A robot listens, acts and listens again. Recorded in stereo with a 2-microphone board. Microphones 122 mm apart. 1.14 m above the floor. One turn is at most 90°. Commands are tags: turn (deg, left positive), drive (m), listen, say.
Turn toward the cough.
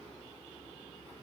<listen/>
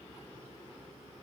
<listen/>
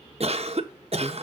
<turn deg="-55"/>
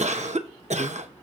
<turn deg="-70"/>
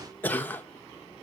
<turn deg="15"/>
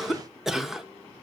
<say>Facing the cough.</say>